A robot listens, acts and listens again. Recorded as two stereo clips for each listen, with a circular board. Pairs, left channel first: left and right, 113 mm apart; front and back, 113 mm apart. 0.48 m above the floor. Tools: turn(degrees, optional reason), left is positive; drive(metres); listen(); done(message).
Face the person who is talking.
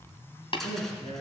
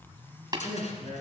turn(degrees=60, reason="The man speaking: 60° left.")
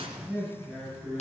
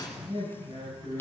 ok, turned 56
done("Found it: a man speaking, straight ahead, over 4 m away.")